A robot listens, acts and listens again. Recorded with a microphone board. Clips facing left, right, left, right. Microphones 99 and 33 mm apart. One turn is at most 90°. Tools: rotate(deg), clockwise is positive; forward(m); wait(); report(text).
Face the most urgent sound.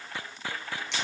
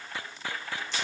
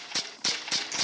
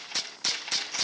wait()
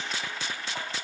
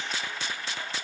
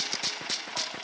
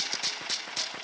wait()
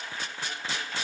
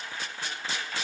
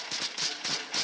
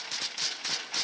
report("I can't make out anything urgent to turn to.")